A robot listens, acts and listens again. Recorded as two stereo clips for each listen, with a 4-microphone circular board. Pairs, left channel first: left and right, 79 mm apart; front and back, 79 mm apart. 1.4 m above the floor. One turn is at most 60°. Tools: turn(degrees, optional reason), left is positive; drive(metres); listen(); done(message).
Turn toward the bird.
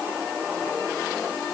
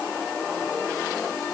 listen()
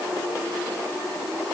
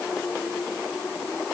listen()
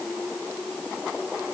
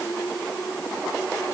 done("I can't make out a bird to turn to.")